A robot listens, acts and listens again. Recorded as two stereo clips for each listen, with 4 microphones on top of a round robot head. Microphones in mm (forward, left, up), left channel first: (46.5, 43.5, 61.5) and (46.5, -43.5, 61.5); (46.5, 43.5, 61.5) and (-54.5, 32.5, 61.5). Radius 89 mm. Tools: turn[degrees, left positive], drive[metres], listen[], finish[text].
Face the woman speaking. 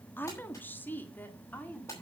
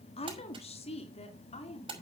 Thought: The woman speaking: 20° left.
Action: turn[20]
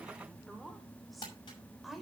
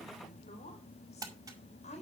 Action: finish[Found it: a woman speaking, straight ahead, 2 to 4 m away.]